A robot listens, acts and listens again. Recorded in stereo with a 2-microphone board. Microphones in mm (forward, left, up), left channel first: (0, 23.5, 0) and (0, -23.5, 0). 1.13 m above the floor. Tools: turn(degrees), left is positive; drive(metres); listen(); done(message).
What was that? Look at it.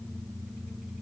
listen()
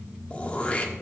turn(degrees=30)
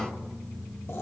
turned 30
turn(degrees=115)
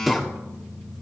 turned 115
done("Facing the throat clearing.")